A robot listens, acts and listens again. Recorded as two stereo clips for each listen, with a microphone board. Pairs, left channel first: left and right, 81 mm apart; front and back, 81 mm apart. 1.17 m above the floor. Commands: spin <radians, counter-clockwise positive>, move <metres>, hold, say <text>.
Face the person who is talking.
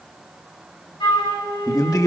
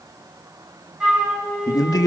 spin 0.79
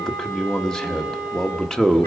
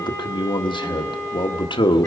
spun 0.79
say Facing the man speaking.